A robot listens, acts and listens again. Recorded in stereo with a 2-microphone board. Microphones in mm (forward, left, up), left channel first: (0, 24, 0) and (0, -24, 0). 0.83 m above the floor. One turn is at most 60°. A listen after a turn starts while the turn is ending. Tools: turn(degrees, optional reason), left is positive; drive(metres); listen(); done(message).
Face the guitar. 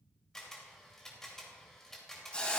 listen()
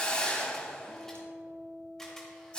turn(degrees=-40, reason="The guitar: about 40° right or 140° right.")
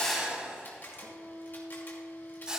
turn(degrees=-60, reason="So it is at 100° right.")
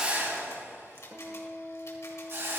turn(degrees=-60, reason="The guitar is now 60° right.")
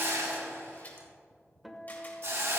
done("Facing the guitar.")